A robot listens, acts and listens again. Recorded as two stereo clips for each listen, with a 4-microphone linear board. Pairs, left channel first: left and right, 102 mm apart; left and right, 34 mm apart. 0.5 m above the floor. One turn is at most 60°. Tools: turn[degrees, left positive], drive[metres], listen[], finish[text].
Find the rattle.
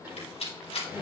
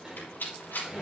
Thought: The rattle: about 70° left or 110° left.
Action: turn[60]
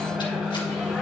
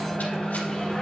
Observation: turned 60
Action: listen[]
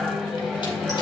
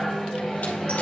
Action: listen[]
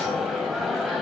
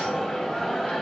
Action: finish[I heard a rattle, but can't make it out now. It was about 10° left or 50° left.]